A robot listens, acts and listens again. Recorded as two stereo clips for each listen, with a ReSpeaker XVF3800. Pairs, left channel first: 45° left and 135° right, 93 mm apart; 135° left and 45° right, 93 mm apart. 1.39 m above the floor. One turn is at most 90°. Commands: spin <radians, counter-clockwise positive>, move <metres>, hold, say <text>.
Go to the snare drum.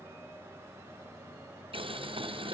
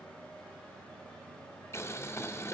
hold
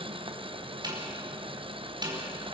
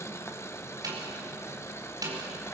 spin -1.57
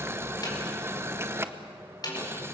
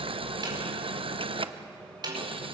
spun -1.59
move 1.0
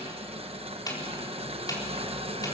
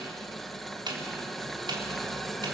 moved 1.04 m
move 1.0
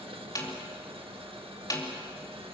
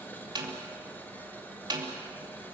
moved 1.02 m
move 1.0
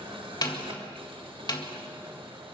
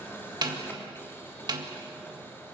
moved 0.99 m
move 1.0
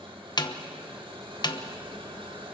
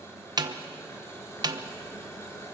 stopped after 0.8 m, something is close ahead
say I am next to the snare drum.